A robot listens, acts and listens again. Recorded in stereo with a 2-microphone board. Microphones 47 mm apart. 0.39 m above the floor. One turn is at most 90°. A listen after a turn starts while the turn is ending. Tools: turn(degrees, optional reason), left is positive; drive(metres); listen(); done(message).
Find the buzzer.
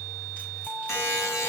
turn(degrees=65, reason="The buzzer: about 65° left or 115° left.")
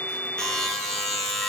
done("Facing the buzzer, 2 to 4 m away.")